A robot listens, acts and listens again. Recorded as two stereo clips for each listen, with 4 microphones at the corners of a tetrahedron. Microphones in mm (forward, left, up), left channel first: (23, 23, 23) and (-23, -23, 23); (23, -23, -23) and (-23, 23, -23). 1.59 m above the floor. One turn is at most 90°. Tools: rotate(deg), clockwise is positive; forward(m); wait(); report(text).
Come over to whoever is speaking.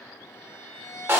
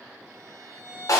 wait()
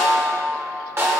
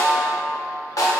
wait()
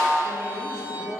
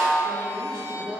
rotate(90)
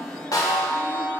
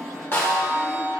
rotate(85)
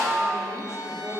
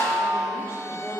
wait()
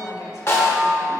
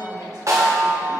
forward(1.0)
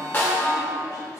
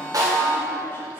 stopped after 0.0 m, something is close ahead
wait()
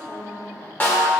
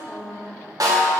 rotate(-10)
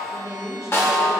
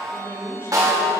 report("Something is in my way. I am facing the woman speaking but have not reached it.")